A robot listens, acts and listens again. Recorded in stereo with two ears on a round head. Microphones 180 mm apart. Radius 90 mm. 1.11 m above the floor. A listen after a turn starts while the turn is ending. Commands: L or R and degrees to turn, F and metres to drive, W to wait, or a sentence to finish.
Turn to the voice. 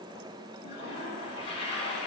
W
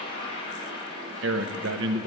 R65
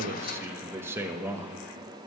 R10
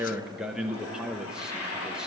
Facing the man speaking, under 1 m away.